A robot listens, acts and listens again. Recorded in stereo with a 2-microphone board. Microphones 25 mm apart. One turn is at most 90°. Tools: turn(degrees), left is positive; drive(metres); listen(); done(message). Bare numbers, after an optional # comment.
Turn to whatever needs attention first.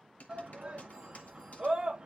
# The shout: about 35° right or 145° right.
turn(-35)
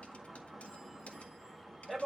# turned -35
done("Found it: a shout, straight ahead.")